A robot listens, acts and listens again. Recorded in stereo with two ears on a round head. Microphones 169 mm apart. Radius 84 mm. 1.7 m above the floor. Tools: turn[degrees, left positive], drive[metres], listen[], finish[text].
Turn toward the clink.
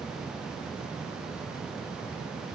Action: listen[]
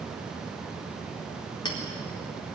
Thought: The clink: about 25° left or 155° left.
Action: turn[25]
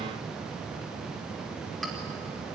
Action: listen[]
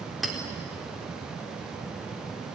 Action: finish[Facing the clink.]